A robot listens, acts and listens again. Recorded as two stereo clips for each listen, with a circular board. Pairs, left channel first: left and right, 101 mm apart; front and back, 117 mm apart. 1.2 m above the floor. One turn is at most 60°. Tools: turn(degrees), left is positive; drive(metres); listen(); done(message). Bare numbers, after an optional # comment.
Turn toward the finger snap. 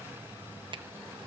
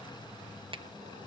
listen()
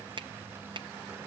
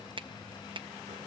# The finger snap: 130° right.
turn(-60)
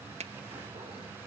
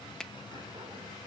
# The finger snap is now 85° right.
turn(-60)
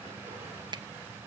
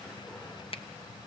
# The finger snap is now 40° right.
turn(-40)
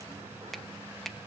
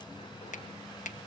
done("Facing the finger snap.")